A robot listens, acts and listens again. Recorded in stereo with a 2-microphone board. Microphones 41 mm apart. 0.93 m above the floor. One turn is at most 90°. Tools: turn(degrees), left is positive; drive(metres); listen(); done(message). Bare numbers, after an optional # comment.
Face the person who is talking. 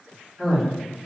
turn(30)
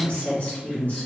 # So it is at 150° left.
turn(90)
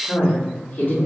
# The woman speaking is now 60° left.
turn(60)
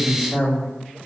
# The woman speaking is now 10° right.
turn(-10)
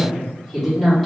done("Facing the woman speaking, 1 to 2 m away.")